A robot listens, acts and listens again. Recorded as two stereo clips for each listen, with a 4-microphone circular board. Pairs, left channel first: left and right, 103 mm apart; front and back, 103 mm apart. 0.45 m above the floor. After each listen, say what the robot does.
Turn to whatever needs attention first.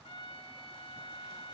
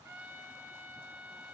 Keep listening.
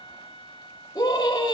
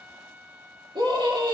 Turn 145° left.
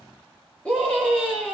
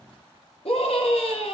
Turn 15° left.
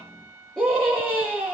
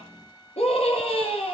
Found it: a scream, straight ahead.